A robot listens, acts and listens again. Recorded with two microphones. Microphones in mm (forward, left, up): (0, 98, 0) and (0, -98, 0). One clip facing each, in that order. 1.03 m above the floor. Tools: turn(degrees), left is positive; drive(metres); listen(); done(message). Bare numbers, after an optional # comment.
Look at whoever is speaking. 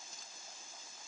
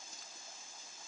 listen()
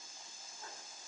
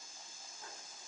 listen()
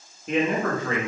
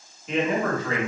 # The man speaking: about 55° left or 125° left.
turn(55)
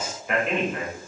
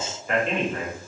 done("Found it: a man speaking, straight ahead.")